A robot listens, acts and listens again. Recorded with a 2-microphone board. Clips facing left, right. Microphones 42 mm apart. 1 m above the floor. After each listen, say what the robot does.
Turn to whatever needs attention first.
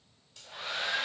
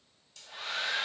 Keep listening.
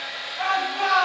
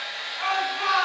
Turn 75° left.
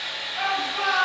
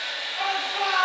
Found it: a shout, straight ahead.